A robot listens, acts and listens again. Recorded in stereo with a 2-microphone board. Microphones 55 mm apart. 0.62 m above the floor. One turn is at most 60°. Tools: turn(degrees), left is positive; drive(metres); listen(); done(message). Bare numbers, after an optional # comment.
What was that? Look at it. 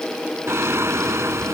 # The singing: about 55° right or 125° right.
turn(-55)
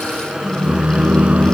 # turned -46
# So it is at 20° right.
turn(-20)
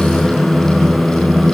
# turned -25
done("Found it: singing, straight ahead.")